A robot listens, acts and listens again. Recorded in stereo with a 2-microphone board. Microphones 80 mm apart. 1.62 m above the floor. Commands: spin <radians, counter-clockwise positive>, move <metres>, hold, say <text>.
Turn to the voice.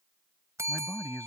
spin 0.44
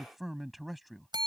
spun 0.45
say Facing the man speaking.